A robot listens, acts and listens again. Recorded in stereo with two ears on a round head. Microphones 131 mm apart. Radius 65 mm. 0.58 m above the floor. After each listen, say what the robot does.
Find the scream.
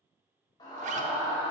Turn 30° left.
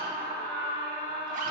Turn 120° left.
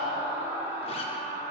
Turn 15° right.
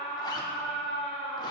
Found it: a scream, straight ahead.